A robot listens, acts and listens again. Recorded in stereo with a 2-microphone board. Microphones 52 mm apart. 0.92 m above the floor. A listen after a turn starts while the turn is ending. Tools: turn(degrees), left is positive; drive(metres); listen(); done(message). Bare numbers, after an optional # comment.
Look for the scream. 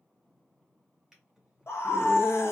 # The scream: about 65° left or 115° left.
turn(65)
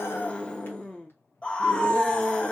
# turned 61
# So it is at 30° left.
turn(30)
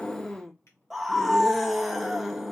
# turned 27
done("Found it: a scream, straight ahead, under 1 m away.")